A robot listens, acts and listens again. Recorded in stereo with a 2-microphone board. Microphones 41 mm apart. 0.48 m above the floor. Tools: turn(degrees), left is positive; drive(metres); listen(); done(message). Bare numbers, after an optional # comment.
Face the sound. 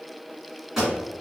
turn(-30)
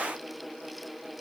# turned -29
listen()
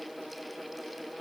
done("I heard a pop, but can't make it out now. It was about 25° left or 145° right.")